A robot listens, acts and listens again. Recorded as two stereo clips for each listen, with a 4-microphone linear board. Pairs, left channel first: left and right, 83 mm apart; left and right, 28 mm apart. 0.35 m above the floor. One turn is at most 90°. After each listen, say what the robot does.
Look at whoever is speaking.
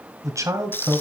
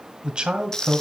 Turn 40° right.
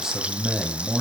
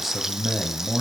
Found it: a man speaking, straight ahead, 1 to 2 m away.